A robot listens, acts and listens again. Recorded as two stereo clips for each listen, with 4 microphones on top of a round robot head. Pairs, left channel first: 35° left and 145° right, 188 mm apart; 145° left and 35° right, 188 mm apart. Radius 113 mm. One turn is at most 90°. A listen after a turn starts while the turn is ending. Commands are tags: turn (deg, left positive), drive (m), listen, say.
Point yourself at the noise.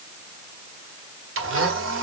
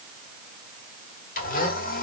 <turn deg="-90"/>
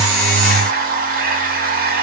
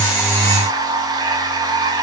<turn deg="-90"/>
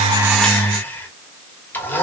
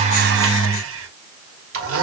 <turn deg="-45"/>
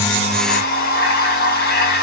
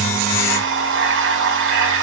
<turn deg="-10"/>
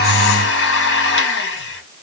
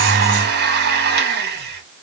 <say>Facing the blender.</say>